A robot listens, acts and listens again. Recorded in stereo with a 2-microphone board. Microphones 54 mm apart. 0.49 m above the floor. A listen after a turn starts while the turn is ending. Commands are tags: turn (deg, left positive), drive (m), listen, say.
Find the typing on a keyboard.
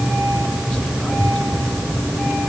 <listen/>
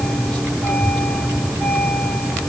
<listen/>
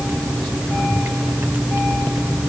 <say>I can't make out typing on a keyboard.</say>